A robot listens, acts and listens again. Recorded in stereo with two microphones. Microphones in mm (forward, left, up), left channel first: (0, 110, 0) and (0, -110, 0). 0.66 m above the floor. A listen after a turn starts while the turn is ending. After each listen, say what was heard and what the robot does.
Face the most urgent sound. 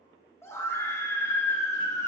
Turn 30° left.
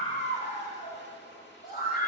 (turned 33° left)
So it is at 135° left. Turn 135° left.
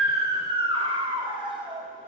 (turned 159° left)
The scream is now 25° right. Turn 25° right.
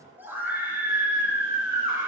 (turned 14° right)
The scream is now 10° right. Turn 10° right.
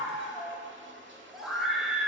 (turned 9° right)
Found it: a scream, straight ahead, 2 to 4 m away.